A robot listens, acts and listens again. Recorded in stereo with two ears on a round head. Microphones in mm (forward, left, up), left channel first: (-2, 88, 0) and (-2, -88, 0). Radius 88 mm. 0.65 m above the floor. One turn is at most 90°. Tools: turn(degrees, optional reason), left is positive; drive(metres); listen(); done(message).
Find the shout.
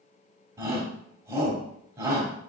turn(degrees=-20, reason="The shout: about 20° right or 160° right.")
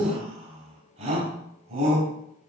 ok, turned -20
turn(degrees=-90, reason="So it is at 140° right.")
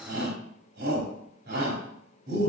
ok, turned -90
turn(degrees=-55, reason="The shout is now 55° right.")
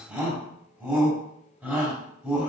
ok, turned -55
done("Found it: a shout, straight ahead, 2 to 4 m away.")